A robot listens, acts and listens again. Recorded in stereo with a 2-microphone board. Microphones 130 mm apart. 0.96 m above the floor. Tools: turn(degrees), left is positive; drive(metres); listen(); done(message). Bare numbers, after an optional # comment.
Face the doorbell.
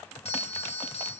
# The doorbell: about 50° left or 130° left.
turn(50)
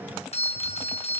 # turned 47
# So it is at 70° left.
turn(70)
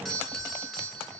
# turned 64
done("Found it: a doorbell, straight ahead.")